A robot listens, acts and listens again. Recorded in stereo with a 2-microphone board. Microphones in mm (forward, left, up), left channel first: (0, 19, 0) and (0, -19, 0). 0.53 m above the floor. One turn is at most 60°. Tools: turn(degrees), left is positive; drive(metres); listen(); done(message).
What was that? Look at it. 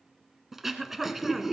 turn(degrees=-30)
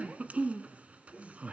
turn(degrees=-60)
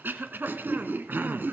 turn(degrees=-60)
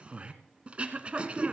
turn(degrees=-35)
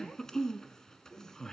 turn(degrees=15)
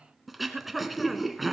done("Facing the throat clearing, 1 to 2 m away.")